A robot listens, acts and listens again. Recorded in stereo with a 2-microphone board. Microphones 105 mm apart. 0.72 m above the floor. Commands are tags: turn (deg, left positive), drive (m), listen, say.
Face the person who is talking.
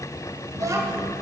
<turn deg="-35"/>
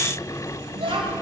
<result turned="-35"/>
<turn deg="-110"/>
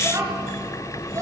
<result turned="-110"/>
<turn deg="-35"/>
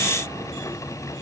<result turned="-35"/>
<listen/>
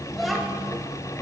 <say>Found it: a child speaking, straight ahead, 1 to 2 m away.</say>